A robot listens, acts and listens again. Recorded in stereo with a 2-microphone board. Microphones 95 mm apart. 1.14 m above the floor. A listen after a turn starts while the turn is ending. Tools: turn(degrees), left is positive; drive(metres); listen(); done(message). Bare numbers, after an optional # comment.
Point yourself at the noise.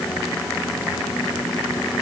listen()
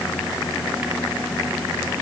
listen()
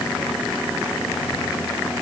done("I can't make out anything.")